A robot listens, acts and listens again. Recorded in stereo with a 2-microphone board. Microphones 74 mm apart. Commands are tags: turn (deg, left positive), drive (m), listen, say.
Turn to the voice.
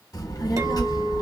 <turn deg="60"/>
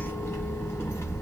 <turn deg="40"/>
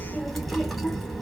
<say>Found it: a child speaking, straight ahead.</say>